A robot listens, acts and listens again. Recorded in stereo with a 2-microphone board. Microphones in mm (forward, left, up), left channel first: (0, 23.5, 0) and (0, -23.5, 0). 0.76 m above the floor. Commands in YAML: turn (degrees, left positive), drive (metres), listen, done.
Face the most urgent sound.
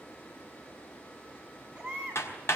turn: -20
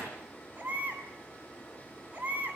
turn: -145
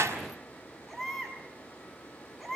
done: "Found it: a baby crying, straight ahead, over 4 m away."